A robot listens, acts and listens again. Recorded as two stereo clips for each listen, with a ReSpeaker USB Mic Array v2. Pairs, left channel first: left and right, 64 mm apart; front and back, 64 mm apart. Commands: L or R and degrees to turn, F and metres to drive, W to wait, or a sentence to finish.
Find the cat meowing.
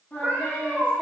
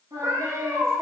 R140
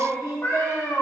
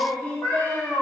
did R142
L40
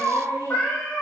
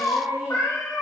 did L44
L20
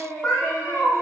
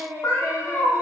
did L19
L15
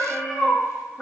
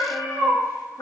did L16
Found it: a cat meowing, straight ahead.